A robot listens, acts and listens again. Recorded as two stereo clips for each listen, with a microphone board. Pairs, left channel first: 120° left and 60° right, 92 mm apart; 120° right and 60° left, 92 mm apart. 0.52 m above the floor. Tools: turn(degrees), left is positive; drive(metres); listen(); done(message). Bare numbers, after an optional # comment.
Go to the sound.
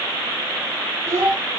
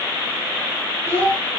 drive(1.0)
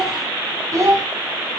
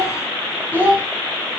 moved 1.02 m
# The child speaking is now 10° right.
turn(-10)
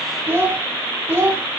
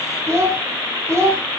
drive(1.0)
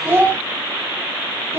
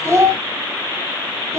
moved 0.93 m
drive(1.0)
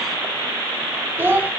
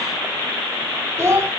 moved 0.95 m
drive(1.0)
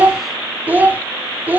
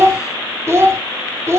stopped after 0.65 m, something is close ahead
done("Arrived at the child speaking, straight ahead.")